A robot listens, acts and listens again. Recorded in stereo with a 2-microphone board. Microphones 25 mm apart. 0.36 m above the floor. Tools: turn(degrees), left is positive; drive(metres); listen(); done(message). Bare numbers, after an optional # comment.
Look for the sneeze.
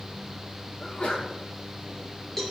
# The sneeze: about 40° left or 140° left.
turn(40)
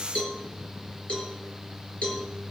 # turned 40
listen()
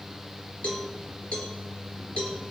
done("I heard a sneeze, but can't make it out now. It was about straight ahead or 100° left.")